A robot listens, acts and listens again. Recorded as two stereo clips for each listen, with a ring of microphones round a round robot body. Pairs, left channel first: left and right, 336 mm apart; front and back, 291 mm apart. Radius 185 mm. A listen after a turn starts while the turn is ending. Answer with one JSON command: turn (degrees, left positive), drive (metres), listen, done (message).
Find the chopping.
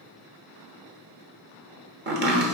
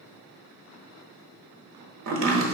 {"turn": -145}
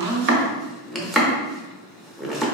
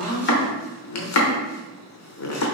{"done": "Found it: chopping, straight ahead, 1 to 2 m away."}